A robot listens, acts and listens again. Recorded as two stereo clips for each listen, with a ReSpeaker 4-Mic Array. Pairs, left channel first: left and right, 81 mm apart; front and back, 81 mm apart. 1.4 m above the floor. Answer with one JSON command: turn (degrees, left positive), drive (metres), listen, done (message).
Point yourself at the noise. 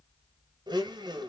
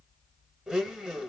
{"turn": -100}
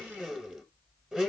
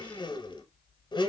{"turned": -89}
{"turn": -10}
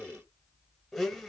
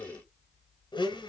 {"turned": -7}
{"done": "Found it: a blender, straight ahead, under 1 m away."}